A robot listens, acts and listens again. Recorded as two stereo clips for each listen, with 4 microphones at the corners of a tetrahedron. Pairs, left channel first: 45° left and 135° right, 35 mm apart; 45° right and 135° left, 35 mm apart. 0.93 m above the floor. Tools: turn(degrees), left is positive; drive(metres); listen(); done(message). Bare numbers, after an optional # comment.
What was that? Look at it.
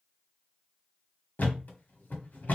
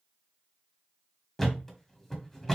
# The thud: 30° left.
turn(30)
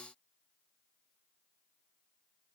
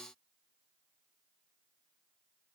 done("I heard a thud from this way, but can't make it out now.")